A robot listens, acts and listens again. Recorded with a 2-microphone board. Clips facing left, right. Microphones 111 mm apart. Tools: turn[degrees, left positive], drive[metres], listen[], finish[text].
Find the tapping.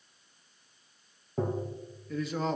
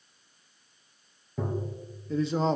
Thought: The tapping: about 45° left or 135° left.
Action: turn[45]
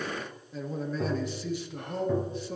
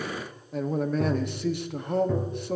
Action: finish[Found it: tapping, straight ahead.]